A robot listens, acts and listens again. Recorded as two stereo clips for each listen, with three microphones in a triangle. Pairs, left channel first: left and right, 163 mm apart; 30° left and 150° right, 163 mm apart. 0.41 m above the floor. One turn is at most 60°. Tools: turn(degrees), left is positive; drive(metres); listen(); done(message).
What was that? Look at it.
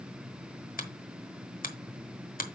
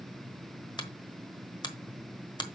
turn(degrees=60)
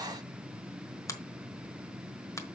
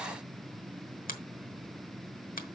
turn(degrees=25)
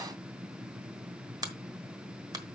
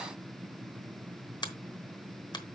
turn(degrees=-30)
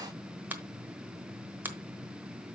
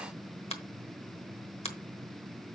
turn(degrees=-15)
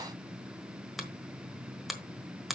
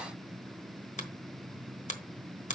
done("Found it: a finger snap, straight ahead, 1 to 2 m away.")